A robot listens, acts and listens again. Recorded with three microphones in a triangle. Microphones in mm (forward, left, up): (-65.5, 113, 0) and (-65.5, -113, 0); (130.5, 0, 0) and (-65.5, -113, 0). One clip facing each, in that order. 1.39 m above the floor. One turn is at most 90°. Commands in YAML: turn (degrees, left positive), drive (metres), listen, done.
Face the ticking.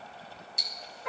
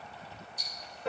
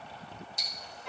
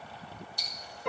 turn: 90
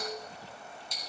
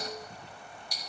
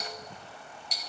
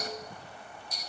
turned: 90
turn: 25
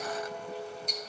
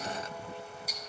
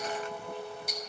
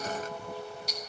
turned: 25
done: "Facing the ticking, 1 to 2 m away."